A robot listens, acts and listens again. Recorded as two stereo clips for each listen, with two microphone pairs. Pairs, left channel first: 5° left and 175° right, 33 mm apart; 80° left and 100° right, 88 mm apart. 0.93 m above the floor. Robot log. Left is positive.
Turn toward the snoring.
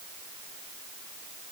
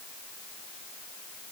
cmd idle
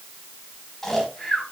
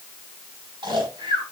note: The snoring: 75° right.
cmd yaw -75
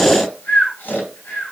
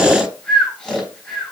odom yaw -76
end: Found it: snoring, straight ahead.